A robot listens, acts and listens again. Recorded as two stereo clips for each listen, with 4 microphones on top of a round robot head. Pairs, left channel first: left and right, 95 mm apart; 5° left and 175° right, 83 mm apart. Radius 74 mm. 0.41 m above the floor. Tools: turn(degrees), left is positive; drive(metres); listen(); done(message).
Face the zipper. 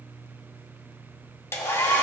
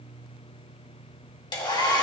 listen()
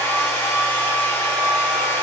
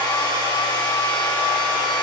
listen()
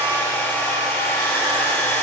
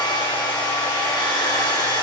done("I can't make out a zipper to turn to.")